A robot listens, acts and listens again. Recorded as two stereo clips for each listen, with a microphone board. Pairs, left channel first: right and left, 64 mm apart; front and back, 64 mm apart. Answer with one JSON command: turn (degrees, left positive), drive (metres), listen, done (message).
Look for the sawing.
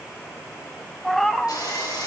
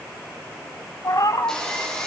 {"turn": -80}
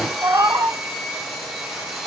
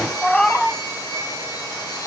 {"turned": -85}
{"done": "Facing the sawing, over 4 m away."}